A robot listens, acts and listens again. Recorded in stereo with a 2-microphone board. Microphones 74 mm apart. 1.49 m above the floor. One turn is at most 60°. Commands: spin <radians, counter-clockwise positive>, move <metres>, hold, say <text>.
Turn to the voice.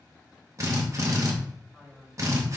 spin -0.52
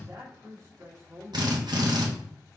spin -1.05
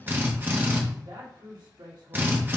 spin -1.05
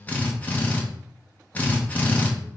spin -0.26
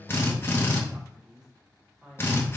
spin -0.17
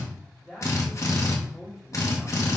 say Facing the man speaking, 2 to 4 m away.